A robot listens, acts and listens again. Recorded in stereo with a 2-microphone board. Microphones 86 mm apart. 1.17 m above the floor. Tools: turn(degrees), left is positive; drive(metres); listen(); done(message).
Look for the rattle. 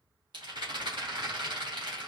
turn(degrees=-60)
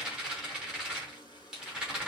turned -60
turn(degrees=-10)
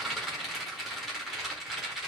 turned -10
done("Found it: a rattle, straight ahead.")